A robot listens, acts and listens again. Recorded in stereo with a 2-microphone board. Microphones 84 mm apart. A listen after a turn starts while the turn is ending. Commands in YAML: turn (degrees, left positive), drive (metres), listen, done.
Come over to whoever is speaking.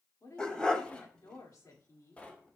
turn: 45
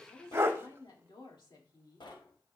turn: 85
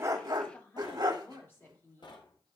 turn: 35
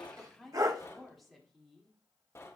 drive: 1.0
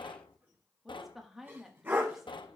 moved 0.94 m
drive: 1.0
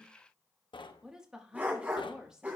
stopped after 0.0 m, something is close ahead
turn: -10
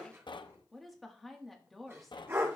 done: "I am next to the woman speaking."